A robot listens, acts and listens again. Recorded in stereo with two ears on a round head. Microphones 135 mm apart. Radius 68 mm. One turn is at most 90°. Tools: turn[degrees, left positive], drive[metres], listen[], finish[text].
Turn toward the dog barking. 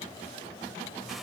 Action: listen[]
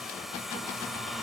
Action: listen[]
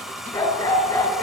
Thought: The dog barking: about 15° left or 165° left.
Action: turn[15]
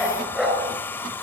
Action: turn[-30]
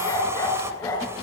Thought: So it is at 15° left.
Action: turn[15]
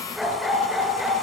Action: finish[Facing the dog barking, over 4 m away.]